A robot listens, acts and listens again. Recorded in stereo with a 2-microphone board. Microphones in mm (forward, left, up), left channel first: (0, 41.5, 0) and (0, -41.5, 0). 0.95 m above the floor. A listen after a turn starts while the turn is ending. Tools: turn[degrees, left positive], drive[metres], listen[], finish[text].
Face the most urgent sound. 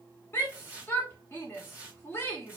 Thought: The shout: about 30° left or 150° left.
Action: turn[30]
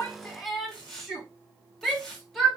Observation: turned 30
Action: finish[Facing the shout.]